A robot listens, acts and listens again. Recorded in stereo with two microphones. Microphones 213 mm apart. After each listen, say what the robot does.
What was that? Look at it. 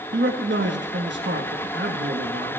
Turn 65° right.
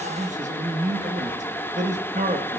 Turn 40° right.
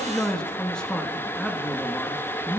Facing the man speaking, 1 to 2 m away.